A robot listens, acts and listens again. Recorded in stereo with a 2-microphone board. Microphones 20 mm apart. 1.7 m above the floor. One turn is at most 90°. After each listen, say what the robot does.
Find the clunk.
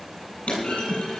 Turn 70° left.
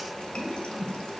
Keep listening.
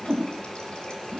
I heard a clunk, but can't make it out now. It was about straight ahead or 40° left.